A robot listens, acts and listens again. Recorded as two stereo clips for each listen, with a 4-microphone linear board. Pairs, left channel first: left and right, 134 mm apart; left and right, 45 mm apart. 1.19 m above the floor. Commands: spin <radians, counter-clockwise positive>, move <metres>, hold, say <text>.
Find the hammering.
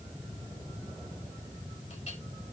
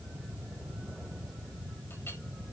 hold
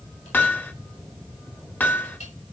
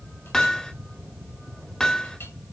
spin 0.52
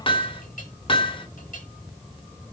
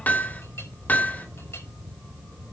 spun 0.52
spin 2.36
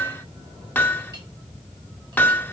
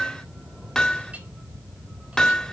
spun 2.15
spin 0.26
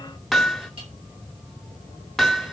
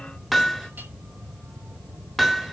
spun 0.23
say Found it: hammering, straight ahead, 1 to 2 m away.